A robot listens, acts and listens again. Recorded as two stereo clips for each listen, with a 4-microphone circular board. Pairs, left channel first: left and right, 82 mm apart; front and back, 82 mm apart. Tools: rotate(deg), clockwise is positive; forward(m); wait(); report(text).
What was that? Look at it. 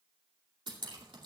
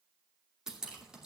rotate(100)
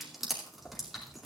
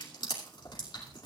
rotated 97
report("Facing the dripping, 2 to 4 m away.")